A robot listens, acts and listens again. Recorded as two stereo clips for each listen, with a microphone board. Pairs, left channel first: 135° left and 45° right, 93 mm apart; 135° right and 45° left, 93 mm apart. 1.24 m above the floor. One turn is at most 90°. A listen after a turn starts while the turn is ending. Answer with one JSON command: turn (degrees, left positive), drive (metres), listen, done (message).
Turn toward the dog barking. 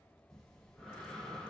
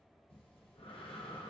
{"listen": true}
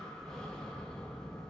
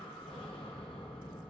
{"listen": true}
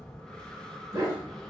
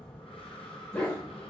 {"turn": -80}
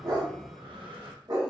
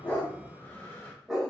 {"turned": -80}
{"turn": -40}
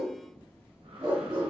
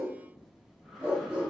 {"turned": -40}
{"turn": -20}
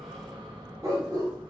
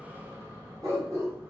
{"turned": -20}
{"done": "Facing the dog barking."}